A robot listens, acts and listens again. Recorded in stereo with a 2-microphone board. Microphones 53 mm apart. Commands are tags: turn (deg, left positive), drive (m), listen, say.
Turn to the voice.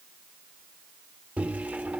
<listen/>
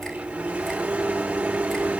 <listen/>
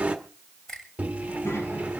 <turn deg="65"/>
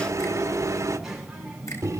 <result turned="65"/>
<say>Found it: a child speaking, straight ahead, over 4 m away.</say>